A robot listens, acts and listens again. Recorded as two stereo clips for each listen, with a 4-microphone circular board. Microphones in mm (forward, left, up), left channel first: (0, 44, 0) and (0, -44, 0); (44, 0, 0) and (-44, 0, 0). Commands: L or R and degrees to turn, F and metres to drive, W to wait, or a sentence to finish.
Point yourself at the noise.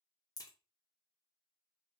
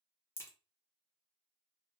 L55
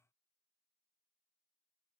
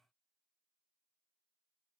Facing where the crack came from. I can't hear it now.